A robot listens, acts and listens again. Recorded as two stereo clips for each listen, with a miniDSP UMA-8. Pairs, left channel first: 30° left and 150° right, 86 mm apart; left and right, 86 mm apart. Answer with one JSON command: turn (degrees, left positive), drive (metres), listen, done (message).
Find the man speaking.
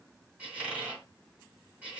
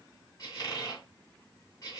{"listen": true}
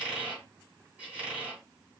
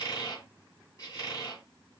{"listen": true}
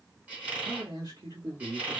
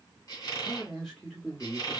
{"turn": 170}
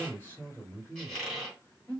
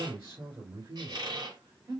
{"turn": -30}
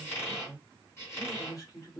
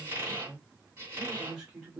{"done": "Facing the man speaking."}